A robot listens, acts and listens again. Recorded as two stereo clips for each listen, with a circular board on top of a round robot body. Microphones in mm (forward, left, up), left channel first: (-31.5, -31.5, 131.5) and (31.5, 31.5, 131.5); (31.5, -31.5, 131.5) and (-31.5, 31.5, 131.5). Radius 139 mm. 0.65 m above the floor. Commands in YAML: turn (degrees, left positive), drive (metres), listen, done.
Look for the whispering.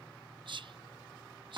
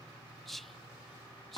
turn: 45
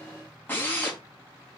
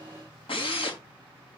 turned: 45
listen: true
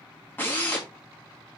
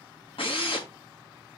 listen: true
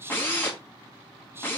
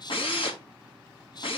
turn: -15
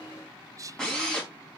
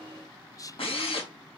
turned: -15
done: "Found it: whispering, straight ahead, under 1 m away."